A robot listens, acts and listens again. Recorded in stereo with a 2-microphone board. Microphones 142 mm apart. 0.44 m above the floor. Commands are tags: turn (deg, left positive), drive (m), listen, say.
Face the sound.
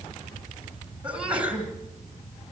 <turn deg="-30"/>
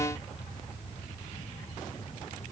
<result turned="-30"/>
<listen/>
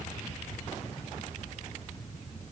<say>I heard a sneeze, but can't make it out now. It was about 20° left or 140° right.</say>